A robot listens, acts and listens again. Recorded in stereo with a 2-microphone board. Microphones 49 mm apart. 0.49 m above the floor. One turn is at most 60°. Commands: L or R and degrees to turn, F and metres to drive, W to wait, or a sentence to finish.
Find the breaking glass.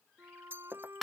R45
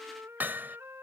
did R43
W
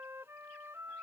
I heard breaking glass, but can't make it out now. It was about straight ahead or 95° right.